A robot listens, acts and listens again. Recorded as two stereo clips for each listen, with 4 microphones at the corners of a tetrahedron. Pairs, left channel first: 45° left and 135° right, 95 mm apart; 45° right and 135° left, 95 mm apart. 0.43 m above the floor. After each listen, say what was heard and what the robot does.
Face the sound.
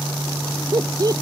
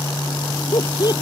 The laughter: 85° right. Turn 85° right.
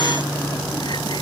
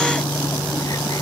Keep listening.
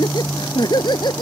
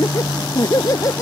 Found it: laughter, straight ahead.